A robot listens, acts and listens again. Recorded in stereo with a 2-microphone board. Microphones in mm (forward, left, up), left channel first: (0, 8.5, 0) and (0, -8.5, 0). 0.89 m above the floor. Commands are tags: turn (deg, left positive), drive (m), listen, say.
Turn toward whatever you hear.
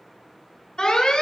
<turn deg="75"/>
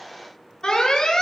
<turn deg="25"/>
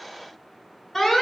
<say>Found it: an alarm, straight ahead.</say>